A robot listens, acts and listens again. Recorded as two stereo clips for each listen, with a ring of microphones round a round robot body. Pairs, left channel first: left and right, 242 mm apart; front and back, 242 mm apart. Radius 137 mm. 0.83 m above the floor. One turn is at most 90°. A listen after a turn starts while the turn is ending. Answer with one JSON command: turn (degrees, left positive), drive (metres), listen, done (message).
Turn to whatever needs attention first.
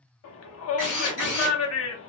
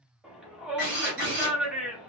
{"turn": 90}
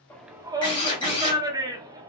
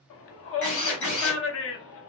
{"turn": -15}
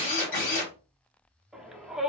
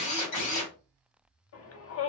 {"done": "Found it: a shout, straight ahead, under 1 m away."}